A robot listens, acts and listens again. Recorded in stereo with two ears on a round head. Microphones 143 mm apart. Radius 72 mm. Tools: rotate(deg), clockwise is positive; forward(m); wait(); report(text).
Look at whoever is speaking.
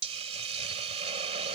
wait()
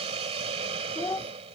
rotate(-15)
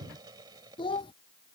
rotate(-150)
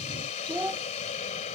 rotate(10)
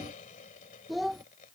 report("Facing the child speaking.")